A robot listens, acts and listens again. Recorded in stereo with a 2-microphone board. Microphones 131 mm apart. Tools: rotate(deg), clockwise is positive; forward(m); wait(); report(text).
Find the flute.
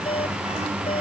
wait()
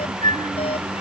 rotate(90)
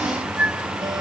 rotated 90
rotate(10)
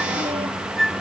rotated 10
report("Found it: a flute, straight ahead.")